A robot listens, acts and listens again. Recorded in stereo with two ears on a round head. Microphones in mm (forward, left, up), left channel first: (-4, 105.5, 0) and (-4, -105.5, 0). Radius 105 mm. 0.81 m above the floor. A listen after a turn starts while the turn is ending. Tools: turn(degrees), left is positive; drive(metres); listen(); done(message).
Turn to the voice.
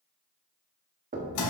listen()
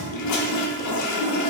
listen()
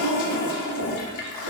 done("I can't make out anyone speaking, only a toilet flushing and knocking.")